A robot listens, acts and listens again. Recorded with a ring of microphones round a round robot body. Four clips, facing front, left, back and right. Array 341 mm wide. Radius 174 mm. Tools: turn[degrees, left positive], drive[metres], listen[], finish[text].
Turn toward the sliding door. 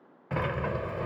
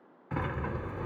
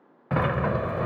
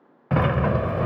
Thought: The sliding door: 110° right.
Action: turn[-110]
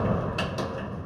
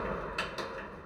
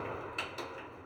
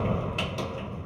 Thought: The sliding door is now 20° right.
Action: turn[-20]
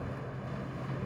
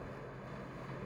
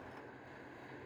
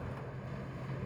Action: finish[Found it: a sliding door, straight ahead.]